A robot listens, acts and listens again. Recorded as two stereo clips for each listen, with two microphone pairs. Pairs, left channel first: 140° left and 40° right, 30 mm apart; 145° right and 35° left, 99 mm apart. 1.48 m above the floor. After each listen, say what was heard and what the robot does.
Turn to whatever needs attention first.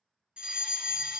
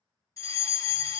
The fire alarm: 95° right. Turn 95° right.
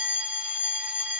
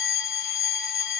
The fire alarm is now 50° right. Turn 50° right.
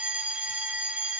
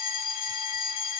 The fire alarm is now 10° right. Turn 10° right.
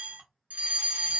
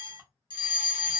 Found it: a fire alarm, straight ahead, 1 to 2 m away.